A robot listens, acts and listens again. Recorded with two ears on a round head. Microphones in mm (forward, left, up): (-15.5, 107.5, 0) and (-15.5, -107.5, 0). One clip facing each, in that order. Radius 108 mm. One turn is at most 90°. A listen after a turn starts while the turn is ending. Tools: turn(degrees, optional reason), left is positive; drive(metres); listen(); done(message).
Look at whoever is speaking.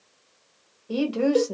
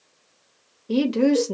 turn(degrees=-30, reason="The woman speaking: about 30° right or 150° right.")
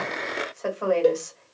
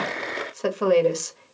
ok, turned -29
turn(degrees=-90, reason="So it is at 120° right.")
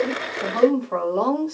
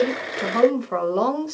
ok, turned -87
turn(degrees=-30, reason="The woman speaking is now 30° right.")
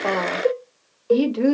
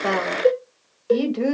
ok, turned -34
done("Facing the woman speaking, 1 to 2 m away.")